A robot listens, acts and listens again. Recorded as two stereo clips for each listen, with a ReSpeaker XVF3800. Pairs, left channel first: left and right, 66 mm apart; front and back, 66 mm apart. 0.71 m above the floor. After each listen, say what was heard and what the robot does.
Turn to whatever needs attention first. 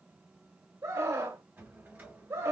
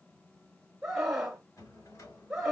The scream: 100° right. Turn 100° right.
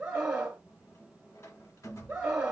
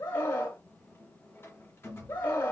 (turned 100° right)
The scream is now 20° right. Turn 20° right.
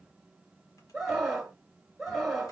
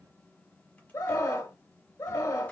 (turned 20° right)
Facing the scream, 1 to 2 m away.